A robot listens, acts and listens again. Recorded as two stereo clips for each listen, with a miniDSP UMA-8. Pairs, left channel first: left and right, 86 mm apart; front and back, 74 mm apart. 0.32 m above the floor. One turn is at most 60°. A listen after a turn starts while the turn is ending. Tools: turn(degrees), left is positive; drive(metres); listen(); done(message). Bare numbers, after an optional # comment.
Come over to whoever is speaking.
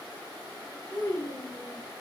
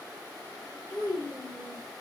# The child speaking: 10° left.
turn(10)
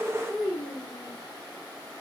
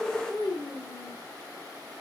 drive(1.0)
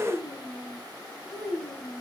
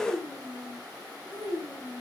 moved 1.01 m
drive(1.0)
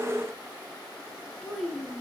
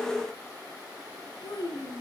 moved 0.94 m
drive(1.0)
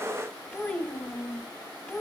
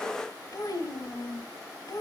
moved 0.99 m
drive(1.0)
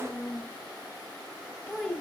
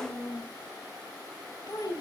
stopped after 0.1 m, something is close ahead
done("I am next to the child speaking.")